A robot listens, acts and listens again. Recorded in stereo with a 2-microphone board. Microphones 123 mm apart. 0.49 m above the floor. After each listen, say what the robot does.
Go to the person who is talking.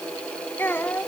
Turn 20° left.
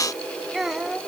Drive 1.0 m forward.
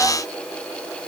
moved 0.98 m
Keep listening.
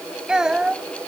Drive 1.0 m forward.
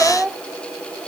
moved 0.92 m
Turn 10° right.
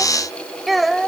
Drive 1.0 m forward.
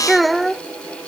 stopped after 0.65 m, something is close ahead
I am next to the child speaking.